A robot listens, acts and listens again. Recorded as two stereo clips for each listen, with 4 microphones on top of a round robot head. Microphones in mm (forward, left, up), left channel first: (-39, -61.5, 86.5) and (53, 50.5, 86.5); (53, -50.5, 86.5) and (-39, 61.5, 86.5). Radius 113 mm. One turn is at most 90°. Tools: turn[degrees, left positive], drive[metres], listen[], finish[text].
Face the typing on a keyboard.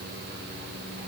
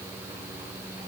Action: listen[]
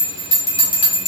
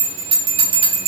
Action: listen[]
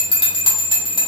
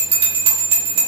Action: finish[I can't make out typing on a keyboard, only a bell.]